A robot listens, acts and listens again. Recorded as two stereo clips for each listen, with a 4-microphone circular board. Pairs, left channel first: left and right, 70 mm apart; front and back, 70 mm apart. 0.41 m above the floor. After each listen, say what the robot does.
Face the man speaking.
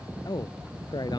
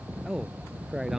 Turn 95° left.
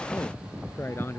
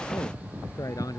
Turn 30° left.
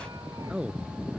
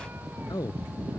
Turn 15° right.
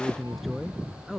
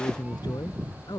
Facing the man speaking.